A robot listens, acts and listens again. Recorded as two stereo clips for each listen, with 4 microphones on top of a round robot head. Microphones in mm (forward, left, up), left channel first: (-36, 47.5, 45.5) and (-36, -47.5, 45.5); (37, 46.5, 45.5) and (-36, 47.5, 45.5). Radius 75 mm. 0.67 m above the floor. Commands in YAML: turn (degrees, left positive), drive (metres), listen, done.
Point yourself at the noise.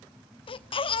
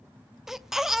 turn: 95
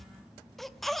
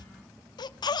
done: "Facing the baby crying, under 1 m away."